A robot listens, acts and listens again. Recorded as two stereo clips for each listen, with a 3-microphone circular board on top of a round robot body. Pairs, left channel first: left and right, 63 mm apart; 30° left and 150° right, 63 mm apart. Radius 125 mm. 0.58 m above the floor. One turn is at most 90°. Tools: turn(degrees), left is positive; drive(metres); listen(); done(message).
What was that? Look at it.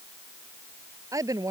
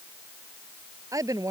turn(degrees=-90)
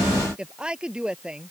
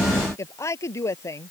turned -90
turn(degrees=-10)
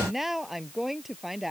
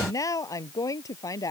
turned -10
done("Found it: a woman speaking, straight ahead.")